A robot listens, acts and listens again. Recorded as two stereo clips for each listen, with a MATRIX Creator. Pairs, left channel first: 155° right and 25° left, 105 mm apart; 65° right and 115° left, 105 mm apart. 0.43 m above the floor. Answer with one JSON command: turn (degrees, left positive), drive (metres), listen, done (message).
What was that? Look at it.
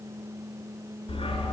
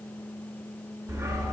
{"turn": 175}
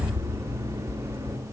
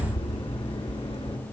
{"turn": -40}
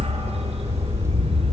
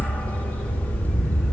{"turn": 15}
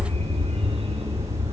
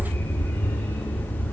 {"done": "Found it: a dog barking, straight ahead."}